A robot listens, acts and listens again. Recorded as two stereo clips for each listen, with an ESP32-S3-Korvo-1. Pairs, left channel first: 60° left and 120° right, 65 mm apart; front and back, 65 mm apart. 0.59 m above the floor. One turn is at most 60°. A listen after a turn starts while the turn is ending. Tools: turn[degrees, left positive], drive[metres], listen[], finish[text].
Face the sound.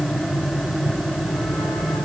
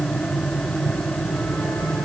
Action: listen[]
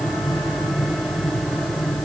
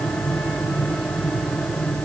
Action: listen[]
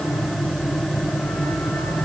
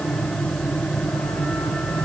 Action: finish[I can't make out anything.]